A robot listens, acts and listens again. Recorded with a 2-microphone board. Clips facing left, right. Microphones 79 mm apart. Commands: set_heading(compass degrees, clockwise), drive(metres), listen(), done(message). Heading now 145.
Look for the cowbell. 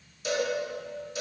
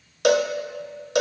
set_heading(220)
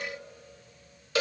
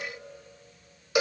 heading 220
set_heading(235)
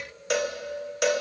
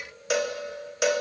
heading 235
done("Facing the cowbell.")